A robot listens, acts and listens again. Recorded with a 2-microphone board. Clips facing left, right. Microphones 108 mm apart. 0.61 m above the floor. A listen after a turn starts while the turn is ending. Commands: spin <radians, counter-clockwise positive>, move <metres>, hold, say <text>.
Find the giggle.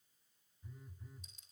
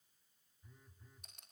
hold
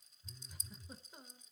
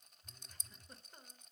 spin 0.52
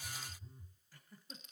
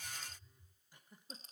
spin -0.35
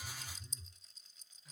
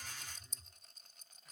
hold
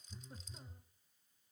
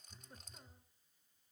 hold
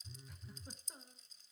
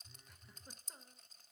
say Found it: a giggle, straight ahead, 1 to 2 m away.